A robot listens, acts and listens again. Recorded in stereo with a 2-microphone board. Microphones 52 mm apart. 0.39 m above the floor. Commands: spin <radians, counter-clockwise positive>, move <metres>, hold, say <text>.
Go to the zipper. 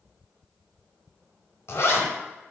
spin 1.05
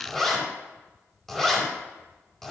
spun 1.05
move 1.0
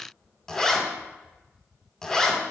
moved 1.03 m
spin 0.26
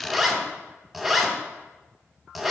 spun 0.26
move 1.0
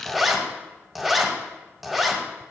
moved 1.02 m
move 1.0
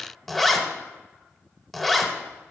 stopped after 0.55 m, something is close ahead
say Arrived at the zipper, straight ahead.